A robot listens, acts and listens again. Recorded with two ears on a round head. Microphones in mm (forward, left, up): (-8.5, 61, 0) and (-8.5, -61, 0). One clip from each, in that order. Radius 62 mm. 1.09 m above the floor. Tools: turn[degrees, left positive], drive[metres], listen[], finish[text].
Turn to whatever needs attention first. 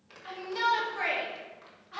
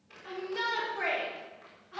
Thought: The shout: about 35° left or 145° left.
Action: turn[35]
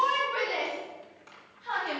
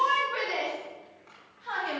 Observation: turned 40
Action: finish[Facing the shout, 2 to 4 m away.]